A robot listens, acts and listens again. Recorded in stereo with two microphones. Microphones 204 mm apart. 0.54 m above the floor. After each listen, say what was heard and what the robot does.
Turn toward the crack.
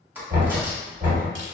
Turn 30° right.
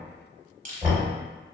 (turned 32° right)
Keep listening.
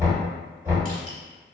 I heard a crack, but can't make it out now. It was about 25° left or 140° right.